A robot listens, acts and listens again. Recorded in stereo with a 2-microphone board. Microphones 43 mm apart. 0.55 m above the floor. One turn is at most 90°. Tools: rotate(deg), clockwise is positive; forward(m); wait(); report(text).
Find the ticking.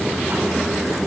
wait()
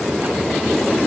wait()
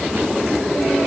report("I can't make out ticking.")